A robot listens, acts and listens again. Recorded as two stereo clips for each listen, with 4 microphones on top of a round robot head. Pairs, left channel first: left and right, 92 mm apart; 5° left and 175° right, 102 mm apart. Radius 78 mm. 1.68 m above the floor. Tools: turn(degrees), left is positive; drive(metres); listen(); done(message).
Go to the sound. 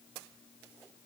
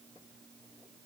listen()
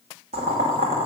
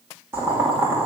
turn(degrees=-100)
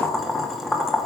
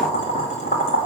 drive(metres=1.0)
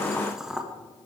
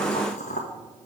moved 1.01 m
drive(metres=1.0)
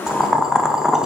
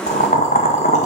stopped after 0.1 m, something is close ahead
done("Arrived at the boiling, straight ahead.")